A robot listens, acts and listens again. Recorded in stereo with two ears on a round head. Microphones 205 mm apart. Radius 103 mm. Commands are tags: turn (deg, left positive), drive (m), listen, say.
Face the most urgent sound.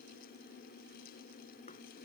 <listen/>
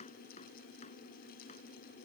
<listen/>
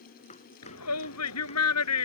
<turn deg="90"/>
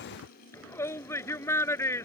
<turn deg="10"/>
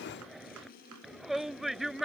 <say>Found it: a shout, straight ahead.</say>